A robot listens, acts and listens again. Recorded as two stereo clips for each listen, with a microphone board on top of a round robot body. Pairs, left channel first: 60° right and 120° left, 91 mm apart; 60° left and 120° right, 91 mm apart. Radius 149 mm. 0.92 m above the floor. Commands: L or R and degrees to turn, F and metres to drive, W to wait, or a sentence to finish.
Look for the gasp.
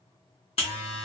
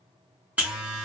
W
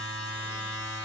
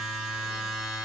W
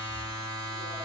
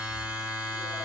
I can't make out a gasp to turn to.